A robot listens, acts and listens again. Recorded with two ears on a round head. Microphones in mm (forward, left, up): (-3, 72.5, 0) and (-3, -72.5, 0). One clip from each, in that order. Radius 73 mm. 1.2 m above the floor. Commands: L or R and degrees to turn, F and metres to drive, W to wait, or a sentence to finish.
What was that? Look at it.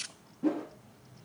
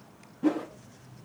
R25
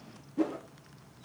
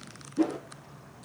Found it: a whoosh, straight ahead, 1 to 2 m away.